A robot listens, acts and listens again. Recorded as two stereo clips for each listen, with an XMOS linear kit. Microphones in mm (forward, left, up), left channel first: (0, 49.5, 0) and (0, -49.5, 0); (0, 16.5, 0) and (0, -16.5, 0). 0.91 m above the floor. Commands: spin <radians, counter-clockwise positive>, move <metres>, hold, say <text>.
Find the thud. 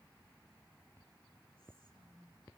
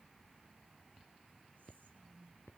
hold
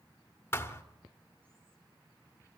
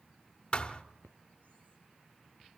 spin 0.44
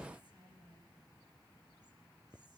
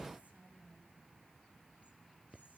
hold
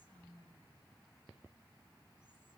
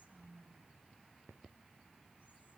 say I heard a thud, but can't make it out now. It was about straight ahead or 130° left.